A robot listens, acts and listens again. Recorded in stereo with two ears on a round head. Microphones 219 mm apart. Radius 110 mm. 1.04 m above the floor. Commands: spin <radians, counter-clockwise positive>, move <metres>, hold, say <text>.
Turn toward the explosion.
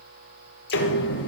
spin 0.79
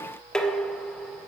hold
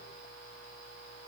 say I heard an explosion, but can't make it out now. It was about straight ahead or 90° left.